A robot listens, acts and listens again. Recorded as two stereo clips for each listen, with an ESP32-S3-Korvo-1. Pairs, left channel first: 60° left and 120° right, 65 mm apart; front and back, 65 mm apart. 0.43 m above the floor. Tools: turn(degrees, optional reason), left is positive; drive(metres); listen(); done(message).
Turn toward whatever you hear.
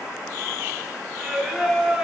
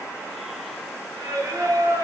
turn(degrees=160, reason="The singing: 160° left.")
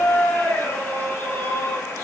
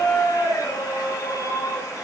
turn(degrees=10, reason="The singing is now 10° left.")
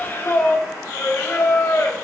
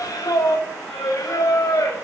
turn(degrees=15, reason="The singing is now 15° left.")
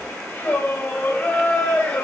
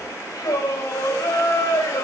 done("Found it: singing, straight ahead, 1 to 2 m away.")